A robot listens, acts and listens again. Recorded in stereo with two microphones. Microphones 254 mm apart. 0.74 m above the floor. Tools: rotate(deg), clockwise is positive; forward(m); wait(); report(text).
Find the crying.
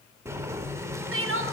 rotate(55)
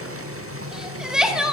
report("Found it: crying, straight ahead, under 1 m away.")